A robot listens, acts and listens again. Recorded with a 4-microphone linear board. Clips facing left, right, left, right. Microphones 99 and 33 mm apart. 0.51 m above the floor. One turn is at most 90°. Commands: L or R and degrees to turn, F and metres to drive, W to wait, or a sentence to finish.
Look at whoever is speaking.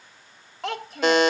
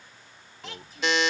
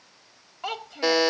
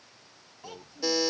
L75
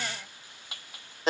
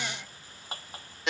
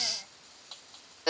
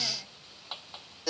W
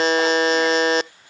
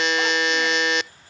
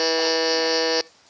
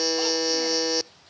W
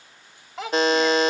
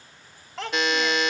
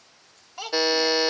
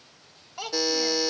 Found it: a child speaking, straight ahead.